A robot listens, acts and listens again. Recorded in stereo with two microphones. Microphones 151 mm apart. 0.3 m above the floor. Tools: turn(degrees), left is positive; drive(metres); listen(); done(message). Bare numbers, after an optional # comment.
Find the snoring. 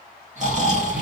# The snoring: about 55° right or 125° right.
turn(-55)
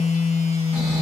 listen()
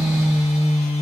listen()
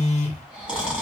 # So it is at 10° right.
turn(-10)
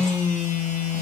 listen()
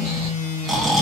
done("Facing the snoring, 1 to 2 m away.")